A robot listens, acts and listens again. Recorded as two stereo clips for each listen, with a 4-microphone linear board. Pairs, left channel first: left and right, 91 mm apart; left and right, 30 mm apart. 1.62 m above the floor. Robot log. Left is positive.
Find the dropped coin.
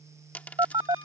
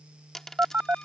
note: The dropped coin: about 20° left or 160° left.
cmd yaw +20
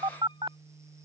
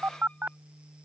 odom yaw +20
cmd idle
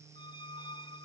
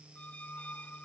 end: I heard a dropped coin, but can't make it out now. It was about straight ahead or 140° left.